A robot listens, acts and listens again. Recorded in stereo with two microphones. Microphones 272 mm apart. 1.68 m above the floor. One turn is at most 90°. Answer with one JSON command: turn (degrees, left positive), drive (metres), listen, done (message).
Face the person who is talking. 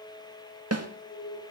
{"listen": true}
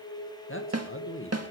{"turn": 50}
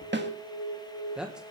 {"done": "Found it: a man speaking, straight ahead, 1 to 2 m away."}